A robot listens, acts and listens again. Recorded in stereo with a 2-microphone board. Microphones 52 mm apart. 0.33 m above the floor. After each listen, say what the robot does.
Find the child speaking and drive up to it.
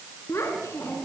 Turn 60° left.
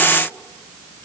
Keep listening.
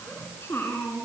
Turn 55° left.
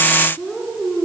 Drive 1.0 m forward.
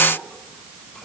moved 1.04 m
Keep listening.
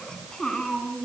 Turn 15° left.
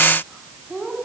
Drive 1.0 m forward.
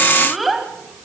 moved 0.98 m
Drive 1.0 m forward.
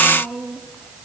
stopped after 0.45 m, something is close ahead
Turn 10° right.
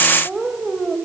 Arrived at the child speaking, straight ahead.